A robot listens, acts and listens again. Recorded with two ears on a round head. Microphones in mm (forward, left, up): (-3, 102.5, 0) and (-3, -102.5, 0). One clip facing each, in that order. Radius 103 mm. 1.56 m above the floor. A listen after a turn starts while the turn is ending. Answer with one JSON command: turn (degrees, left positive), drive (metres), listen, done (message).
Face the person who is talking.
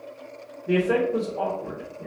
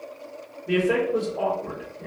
{"turn": 30}
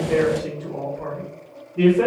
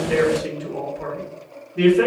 {"turn": -25}
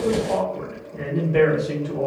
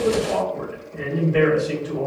{"done": "Facing the man speaking."}